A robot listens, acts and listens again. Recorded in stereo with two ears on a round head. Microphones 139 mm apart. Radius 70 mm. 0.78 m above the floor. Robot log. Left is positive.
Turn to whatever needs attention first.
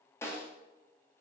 cmd idle
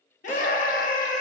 note: The scream: about 55° left or 125° left.
cmd yaw +55
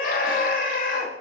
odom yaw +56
note: So it is at 65° left.
cmd yaw +65
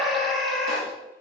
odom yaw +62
end: Facing the scream, under 1 m away.